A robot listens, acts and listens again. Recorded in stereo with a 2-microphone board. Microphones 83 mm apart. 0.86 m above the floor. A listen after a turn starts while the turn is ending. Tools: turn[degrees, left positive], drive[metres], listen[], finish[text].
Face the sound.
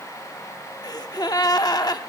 Thought: The gasp: about 50° left or 130° left.
Action: turn[50]
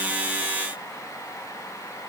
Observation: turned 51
Action: listen[]
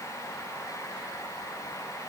Action: finish[I heard a gasp, but can't make it out now. It was about straight ahead or 75° left.]